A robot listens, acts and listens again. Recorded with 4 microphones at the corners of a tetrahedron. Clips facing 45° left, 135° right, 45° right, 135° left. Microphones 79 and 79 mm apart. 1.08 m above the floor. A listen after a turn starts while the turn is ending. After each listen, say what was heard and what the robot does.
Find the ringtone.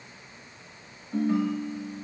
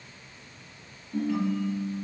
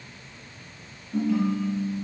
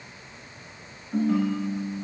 The ringtone: 85° left. Turn 85° left.
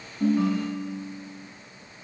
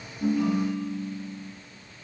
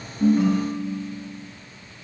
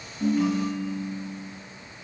Found it: a ringtone, straight ahead, 2 to 4 m away.